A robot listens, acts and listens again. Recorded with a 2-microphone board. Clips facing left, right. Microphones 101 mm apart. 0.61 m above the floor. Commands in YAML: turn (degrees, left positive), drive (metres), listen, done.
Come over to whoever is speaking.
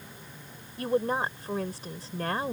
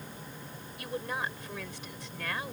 turn: 40
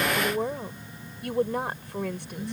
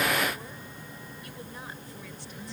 turn: 100
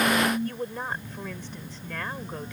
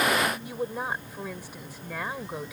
turn: -10
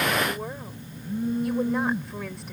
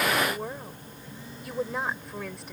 drive: 1.0
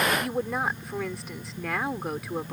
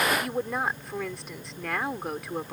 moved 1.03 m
drive: 1.0
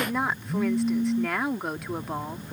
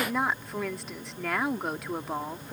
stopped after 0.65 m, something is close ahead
done: "Arrived at the woman speaking, straight ahead."